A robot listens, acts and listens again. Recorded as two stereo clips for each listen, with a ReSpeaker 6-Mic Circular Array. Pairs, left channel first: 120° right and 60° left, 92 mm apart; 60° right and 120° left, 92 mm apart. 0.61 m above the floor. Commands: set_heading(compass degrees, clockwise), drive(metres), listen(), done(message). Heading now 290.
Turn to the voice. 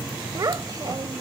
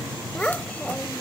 set_heading(275)
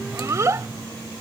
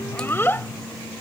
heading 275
done("Facing the child speaking.")